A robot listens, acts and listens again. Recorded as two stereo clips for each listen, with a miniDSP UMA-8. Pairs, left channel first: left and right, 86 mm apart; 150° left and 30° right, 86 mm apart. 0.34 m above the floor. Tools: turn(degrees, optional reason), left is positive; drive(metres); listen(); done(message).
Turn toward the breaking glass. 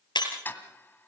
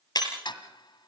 turn(degrees=115, reason="The breaking glass: 115° left.")
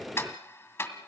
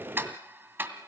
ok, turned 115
done("I heard breaking glass from this way, but can't make it out now.")